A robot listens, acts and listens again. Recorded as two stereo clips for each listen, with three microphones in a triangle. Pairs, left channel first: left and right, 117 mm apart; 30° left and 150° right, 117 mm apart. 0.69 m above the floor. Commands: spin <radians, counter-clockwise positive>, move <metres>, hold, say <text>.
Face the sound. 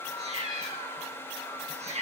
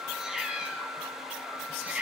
spin -1.31
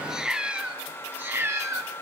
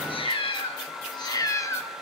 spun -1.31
spin -0.52
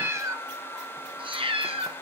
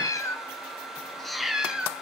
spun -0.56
spin -1.22
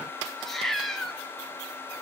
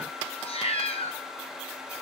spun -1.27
say Facing the cat meowing.